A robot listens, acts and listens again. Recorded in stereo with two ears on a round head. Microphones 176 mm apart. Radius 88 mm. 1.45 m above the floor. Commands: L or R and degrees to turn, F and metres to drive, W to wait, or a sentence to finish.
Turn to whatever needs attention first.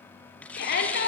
L55
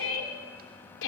L70
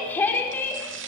L10
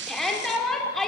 Facing the shout.